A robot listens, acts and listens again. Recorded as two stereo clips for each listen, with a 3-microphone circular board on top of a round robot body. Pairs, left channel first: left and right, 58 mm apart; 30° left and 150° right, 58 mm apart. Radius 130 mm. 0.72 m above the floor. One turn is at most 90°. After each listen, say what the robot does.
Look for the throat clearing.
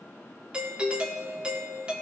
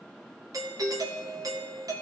Keep listening.
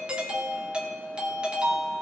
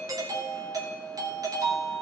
Keep listening.
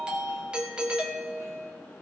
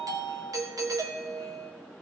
I can't make out throat clearing to turn to.